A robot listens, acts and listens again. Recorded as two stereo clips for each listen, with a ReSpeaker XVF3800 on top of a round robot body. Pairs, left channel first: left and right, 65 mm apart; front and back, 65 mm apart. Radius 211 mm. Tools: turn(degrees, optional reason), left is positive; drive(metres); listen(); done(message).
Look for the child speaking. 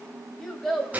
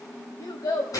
done("Found it: a child speaking, straight ahead, 2 to 4 m away.")